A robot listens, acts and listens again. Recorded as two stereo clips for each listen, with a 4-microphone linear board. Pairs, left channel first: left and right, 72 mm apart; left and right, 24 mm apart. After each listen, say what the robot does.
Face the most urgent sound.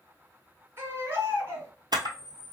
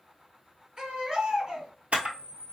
Turn 40° right.
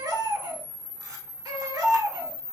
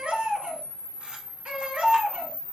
Turn 100° right.
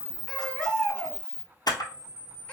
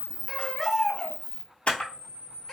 Turn 20° left.
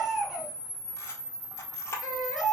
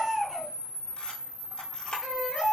Facing the baby crying, 1 to 2 m away.